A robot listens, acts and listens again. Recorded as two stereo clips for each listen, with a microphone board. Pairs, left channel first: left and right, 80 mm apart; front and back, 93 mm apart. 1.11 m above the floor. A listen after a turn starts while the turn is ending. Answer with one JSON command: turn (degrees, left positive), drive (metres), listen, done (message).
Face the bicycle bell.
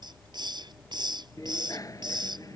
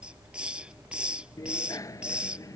{"turn": 50}
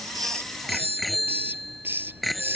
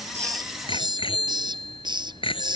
{"done": "Facing the bicycle bell."}